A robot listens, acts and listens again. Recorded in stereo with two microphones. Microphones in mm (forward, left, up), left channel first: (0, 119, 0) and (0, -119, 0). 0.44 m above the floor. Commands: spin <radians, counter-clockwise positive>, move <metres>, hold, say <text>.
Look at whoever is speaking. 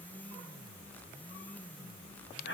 hold
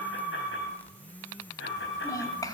spin 0.52
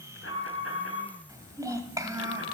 spin -0.26
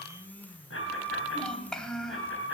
say Found it: a child speaking, straight ahead, 1 to 2 m away.